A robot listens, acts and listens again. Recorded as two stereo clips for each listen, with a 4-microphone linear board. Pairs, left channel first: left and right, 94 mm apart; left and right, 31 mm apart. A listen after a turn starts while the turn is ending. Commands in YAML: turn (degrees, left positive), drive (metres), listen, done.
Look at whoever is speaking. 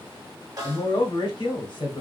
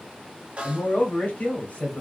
turn: 55
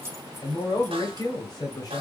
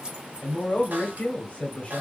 turn: 55
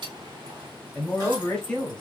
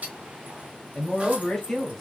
turn: 10
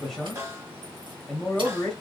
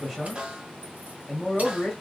done: "Facing the man speaking, 1 to 2 m away."